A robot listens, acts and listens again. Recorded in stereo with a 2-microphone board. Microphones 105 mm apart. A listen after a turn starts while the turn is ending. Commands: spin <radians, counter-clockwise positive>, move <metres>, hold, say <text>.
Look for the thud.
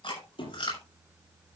spin 0.96
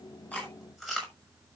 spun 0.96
hold
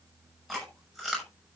say I heard a thud, but can't make it out now. It was about straight ahead or 70° left.